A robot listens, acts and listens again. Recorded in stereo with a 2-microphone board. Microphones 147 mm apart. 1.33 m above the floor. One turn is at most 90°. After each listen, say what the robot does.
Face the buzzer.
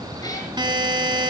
Turn 30° right.
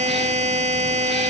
Turn 90° right.
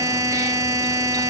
Turn 25° right.
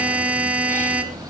Turn 10° right.
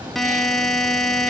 Found it: a buzzer, straight ahead.